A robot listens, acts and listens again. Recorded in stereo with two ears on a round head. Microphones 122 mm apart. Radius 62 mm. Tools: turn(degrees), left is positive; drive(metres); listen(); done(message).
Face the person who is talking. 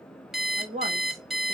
turn(degrees=-50)
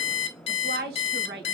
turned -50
turn(degrees=-80)
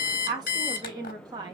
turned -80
turn(degrees=-30)
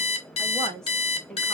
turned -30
done("Facing the woman speaking.")